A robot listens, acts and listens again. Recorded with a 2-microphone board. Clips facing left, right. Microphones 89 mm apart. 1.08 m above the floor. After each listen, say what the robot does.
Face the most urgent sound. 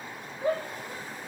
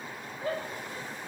Turn 20° left.
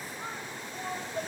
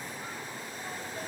Turn 140° left.
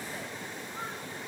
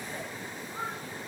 Keep listening.
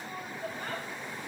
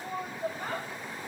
Turn 15° right.
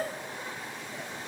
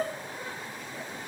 Found it: a shout, straight ahead.